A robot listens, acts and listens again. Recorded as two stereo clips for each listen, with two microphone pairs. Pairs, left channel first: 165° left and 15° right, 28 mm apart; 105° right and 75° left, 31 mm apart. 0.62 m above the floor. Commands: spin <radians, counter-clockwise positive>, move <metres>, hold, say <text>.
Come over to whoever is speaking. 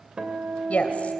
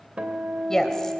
spin 3.14
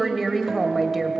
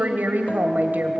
spin 1.22
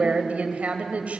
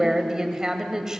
move 1.0
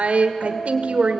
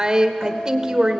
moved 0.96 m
spin 0.17
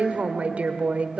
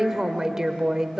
move 1.0
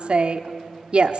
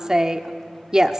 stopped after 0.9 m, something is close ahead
spin 0.17
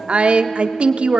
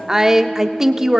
say Arrived at the woman speaking, straight ahead.